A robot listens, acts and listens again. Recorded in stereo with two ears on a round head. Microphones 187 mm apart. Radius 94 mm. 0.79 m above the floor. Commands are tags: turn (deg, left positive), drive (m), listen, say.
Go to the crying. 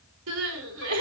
<turn deg="-90"/>
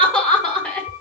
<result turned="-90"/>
<drive m="1.0"/>
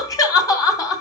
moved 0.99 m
<turn deg="20"/>
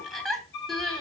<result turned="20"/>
<drive m="1.0"/>
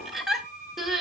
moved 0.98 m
<drive m="1.0"/>
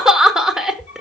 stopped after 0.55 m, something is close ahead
<say>Arrived at the crying, straight ahead.</say>